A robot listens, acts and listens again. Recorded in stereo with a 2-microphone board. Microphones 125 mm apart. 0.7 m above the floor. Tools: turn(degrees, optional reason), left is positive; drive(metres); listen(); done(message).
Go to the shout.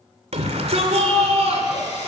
turn(degrees=-65, reason="The shout: about 65° right or 115° right.")
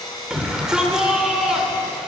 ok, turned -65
drive(metres=1.0)
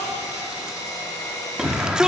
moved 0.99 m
drive(metres=1.0)
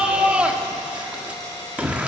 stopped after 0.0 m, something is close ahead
turn(degrees=-10, reason="The shout is now 10° right.")
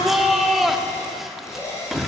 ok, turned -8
done("I am next to the shout.")